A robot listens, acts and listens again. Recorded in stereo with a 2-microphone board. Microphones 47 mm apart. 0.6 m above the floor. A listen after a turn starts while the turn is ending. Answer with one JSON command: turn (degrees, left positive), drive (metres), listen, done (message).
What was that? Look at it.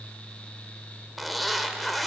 {"turn": 30}
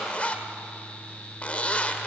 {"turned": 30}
{"turn": 150}
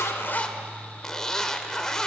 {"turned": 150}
{"turn": 10}
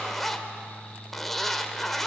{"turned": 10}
{"done": "Found it: a zipper, straight ahead, 1 to 2 m away."}